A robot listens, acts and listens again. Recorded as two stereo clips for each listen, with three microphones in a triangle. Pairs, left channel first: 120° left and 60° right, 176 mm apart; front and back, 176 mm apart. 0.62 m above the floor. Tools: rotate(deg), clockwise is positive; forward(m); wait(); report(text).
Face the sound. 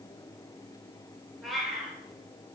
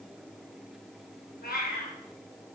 rotate(-30)
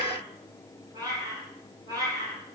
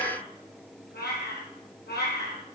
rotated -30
rotate(-10)
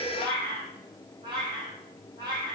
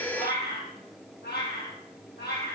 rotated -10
report("Facing the cat meowing.")